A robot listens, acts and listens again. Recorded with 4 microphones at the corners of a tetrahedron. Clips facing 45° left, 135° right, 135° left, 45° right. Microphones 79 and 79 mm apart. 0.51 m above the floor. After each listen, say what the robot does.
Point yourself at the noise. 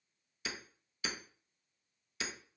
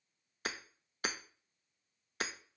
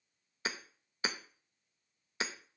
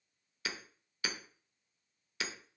Turn 170° right.
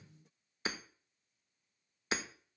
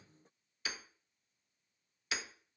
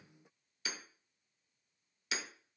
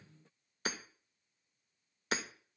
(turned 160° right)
Turn 10° right.
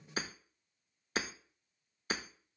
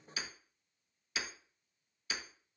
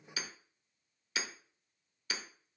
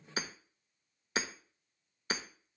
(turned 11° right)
Found it: hammering, straight ahead.